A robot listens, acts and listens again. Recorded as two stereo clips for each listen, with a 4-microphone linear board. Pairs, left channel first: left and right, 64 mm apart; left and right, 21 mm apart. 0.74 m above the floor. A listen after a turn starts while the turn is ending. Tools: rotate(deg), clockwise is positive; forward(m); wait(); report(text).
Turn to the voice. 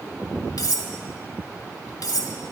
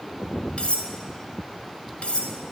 wait()
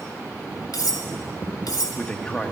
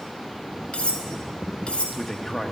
rotate(-30)
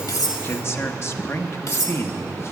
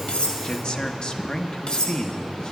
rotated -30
rotate(-135)
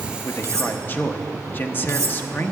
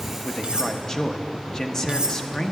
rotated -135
rotate(-35)
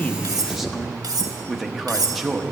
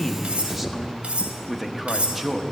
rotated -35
report("Found it: a man speaking, straight ahead, under 1 m away.")